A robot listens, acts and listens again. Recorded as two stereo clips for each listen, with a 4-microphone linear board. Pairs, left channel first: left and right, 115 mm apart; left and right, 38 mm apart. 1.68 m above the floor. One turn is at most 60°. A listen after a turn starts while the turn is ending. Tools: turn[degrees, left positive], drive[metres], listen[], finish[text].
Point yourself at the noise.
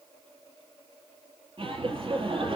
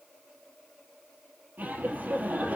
Thought: The laughter: about 50° right or 130° right.
Action: turn[-50]
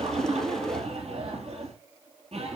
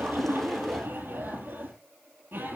Thought: So it is at 75° right.
Action: turn[-60]
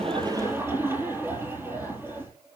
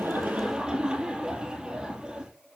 Thought: The laughter is now 25° right.
Action: turn[-25]
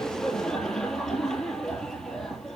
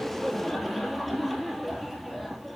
Action: finish[Facing the laughter.]